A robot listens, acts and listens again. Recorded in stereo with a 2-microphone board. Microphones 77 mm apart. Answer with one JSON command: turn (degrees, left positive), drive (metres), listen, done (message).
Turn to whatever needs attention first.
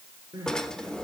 {"turn": -55}
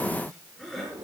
{"done": "Facing the crying, over 4 m away."}